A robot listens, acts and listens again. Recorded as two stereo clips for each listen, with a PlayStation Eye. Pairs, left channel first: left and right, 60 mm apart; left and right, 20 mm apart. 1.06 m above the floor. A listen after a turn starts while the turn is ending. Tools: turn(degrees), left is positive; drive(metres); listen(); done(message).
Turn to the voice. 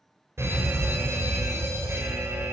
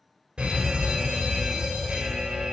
listen()
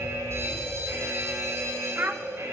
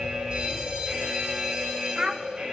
turn(degrees=-35)
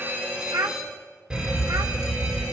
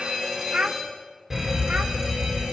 turn(degrees=-110)
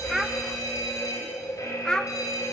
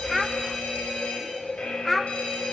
turn(degrees=10)
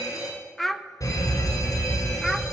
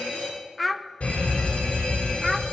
done("Facing the child speaking.")